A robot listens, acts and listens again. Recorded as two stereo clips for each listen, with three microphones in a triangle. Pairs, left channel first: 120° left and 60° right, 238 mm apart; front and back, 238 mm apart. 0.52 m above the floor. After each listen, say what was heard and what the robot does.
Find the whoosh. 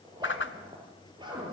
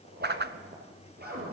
The whoosh: 145° left. Turn 145° left.
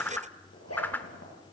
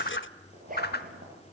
The whoosh is now 40° left. Turn 40° left.
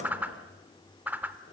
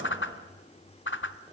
The whoosh is now 20° left. Turn 20° left.
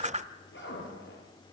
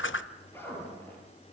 Found it: a whoosh, straight ahead.